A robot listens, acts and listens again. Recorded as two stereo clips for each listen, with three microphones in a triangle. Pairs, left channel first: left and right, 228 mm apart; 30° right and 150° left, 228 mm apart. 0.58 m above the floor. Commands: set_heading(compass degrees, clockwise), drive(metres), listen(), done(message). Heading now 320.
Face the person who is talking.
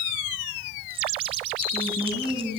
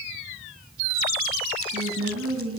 set_heading(160)
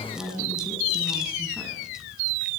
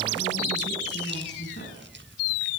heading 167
listen()
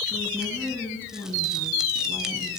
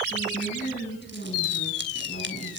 set_heading(157)
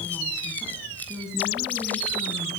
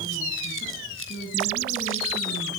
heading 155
done("Found it: a woman speaking, straight ahead, over 4 m away.")